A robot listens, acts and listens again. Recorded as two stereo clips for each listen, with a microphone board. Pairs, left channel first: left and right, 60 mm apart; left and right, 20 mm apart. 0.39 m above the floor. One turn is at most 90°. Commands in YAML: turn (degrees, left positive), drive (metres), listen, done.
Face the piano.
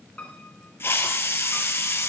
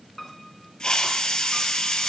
turn: 20
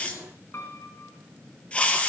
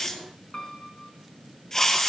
turn: 90
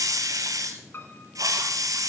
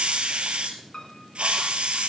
turn: 40
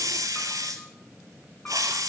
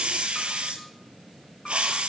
listen: true
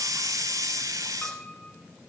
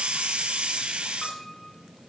turn: 20
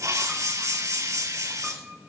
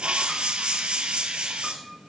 listen: true
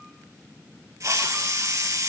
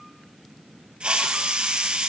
listen: true
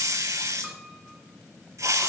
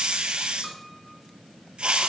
done: "Facing where the piano came from. I can't hear it now."